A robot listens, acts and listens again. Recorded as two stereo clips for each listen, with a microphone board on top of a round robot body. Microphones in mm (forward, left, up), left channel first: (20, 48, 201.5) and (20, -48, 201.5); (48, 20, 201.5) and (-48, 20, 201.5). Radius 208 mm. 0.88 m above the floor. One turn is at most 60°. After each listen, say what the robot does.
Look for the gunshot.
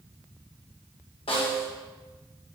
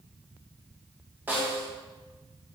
Keep listening.
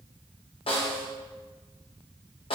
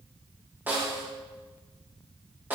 Keep listening.
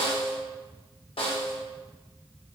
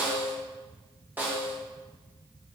I can't make out a gunshot to turn to.